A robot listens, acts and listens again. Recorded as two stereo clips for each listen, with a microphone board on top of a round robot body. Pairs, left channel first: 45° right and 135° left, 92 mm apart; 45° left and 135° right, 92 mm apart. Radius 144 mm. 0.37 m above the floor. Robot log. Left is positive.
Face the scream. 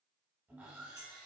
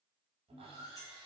cmd idle
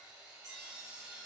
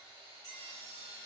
cmd idle
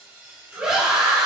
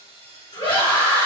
note: The scream: 55° left.
cmd yaw +55
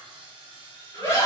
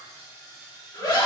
end: Found it: a scream, straight ahead.